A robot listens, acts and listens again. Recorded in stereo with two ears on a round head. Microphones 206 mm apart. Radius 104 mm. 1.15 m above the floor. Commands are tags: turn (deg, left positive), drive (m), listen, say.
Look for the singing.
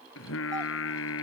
<turn deg="65"/>
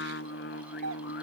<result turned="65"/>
<turn deg="50"/>
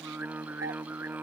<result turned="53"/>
<turn deg="-10"/>
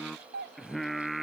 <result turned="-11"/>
<say>Facing the singing.</say>